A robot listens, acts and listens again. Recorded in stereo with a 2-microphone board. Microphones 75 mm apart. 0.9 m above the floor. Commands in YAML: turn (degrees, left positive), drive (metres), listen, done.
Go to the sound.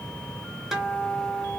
turn: -30
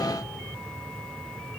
listen: true
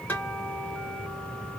turn: 20
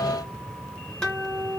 turn: 10
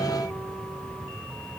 listen: true
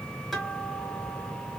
drive: 1.0
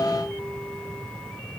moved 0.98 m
listen: true
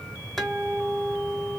drive: 1.0
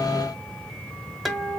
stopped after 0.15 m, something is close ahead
done: "I am next to the guitar."